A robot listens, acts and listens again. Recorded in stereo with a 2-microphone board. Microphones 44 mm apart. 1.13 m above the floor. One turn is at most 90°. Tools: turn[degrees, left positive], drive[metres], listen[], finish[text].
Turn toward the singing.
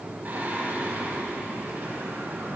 Thought: The singing: about 55° right or 125° right.
Action: turn[-55]
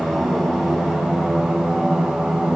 Thought: So it is at 10° right.
Action: turn[-10]
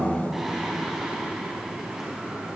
Thought: The singing is now 10° right.
Action: turn[-10]
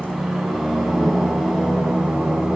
Action: finish[Facing the singing.]